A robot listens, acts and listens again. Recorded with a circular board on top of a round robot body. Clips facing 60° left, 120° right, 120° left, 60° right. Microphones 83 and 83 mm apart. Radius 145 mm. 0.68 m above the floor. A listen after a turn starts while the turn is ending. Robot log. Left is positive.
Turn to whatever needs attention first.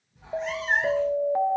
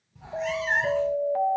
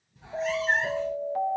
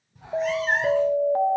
note: The alarm: 15° right.
cmd yaw -15
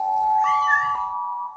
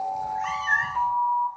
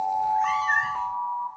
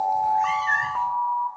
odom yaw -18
end: Found it: an alarm, straight ahead, under 1 m away.